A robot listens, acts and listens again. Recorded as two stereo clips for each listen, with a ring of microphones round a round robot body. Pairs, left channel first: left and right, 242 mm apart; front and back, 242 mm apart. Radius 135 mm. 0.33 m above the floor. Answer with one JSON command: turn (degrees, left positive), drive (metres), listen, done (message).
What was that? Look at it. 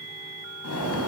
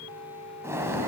{"turn": 100}
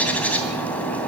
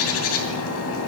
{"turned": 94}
{"done": "Facing the bird."}